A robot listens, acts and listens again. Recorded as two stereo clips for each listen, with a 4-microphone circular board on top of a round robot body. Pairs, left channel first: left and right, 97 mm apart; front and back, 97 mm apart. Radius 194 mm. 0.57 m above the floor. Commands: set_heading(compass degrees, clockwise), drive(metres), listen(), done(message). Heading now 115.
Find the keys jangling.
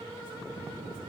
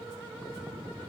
listen()
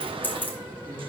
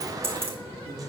set_heading(315)
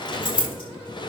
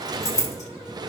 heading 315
set_heading(260)
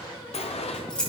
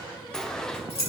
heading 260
set_heading(250)
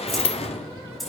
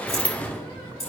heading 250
done("Found it: keys jangling, straight ahead, over 4 m away.")